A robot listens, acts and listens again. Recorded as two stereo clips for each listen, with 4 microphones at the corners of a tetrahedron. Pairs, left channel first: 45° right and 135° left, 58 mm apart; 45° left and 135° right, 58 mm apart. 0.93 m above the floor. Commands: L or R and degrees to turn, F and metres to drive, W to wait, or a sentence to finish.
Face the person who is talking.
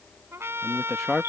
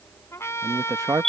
R130
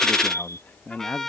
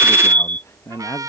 L15
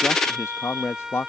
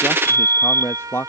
Facing the man speaking.